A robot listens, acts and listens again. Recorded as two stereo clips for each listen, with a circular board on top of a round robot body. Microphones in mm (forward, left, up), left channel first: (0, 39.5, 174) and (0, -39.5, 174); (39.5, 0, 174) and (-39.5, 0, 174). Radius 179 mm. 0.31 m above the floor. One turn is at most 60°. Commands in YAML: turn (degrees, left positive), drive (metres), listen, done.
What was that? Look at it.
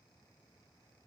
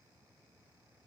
listen: true
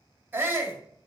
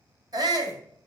turn: -60
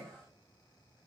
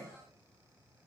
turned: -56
turn: -60
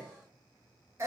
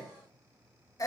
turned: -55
turn: -40
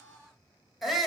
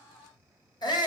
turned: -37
done: "Facing the shout, 2 to 4 m away."